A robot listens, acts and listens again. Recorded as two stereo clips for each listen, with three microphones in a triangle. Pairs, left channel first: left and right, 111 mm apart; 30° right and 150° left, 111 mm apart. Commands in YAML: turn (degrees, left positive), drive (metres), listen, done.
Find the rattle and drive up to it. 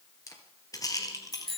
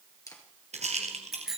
turn: 145
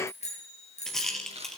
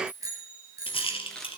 drive: 1.0
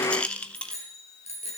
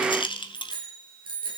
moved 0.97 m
turn: 10
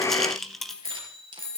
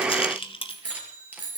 drive: 1.0
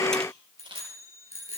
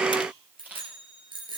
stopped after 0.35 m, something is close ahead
listen: true
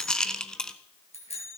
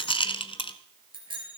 done: "Arrived at the rattle, straight ahead."